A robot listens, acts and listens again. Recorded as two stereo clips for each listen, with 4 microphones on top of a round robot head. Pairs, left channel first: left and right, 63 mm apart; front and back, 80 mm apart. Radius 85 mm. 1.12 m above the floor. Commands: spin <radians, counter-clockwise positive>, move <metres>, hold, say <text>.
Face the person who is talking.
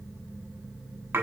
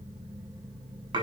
hold
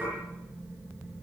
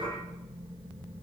hold
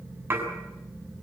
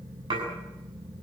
say I can't make out anyone speaking, only dishes clattering.